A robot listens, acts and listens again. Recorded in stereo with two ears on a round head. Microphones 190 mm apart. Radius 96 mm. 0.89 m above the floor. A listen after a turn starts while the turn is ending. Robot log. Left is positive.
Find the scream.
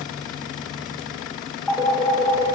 cmd idle
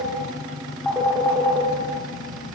cmd idle
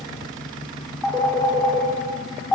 end: I can't make out a scream, only a phone ringing.